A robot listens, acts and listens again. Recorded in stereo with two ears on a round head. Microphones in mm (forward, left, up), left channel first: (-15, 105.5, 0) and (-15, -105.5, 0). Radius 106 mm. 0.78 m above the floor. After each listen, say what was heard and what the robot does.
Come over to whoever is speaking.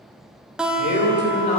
The man speaking: about 50° left or 130° left. Turn 50° left.
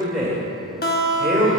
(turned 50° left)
Drive 1.0 m forward.
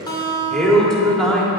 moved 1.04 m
Drive 1.0 m forward.
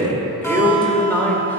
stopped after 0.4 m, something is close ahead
The man speaking is now 10° left. Turn 10° left.
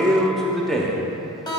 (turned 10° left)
Arrived at the man speaking, straight ahead.